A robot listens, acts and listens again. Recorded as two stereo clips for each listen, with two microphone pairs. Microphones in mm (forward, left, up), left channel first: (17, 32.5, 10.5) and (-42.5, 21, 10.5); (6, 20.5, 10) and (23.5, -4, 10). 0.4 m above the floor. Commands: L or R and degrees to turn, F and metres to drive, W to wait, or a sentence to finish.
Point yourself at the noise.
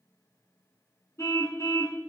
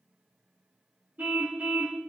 R25
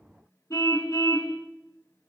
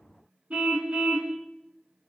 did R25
Facing the car horn, 2 to 4 m away.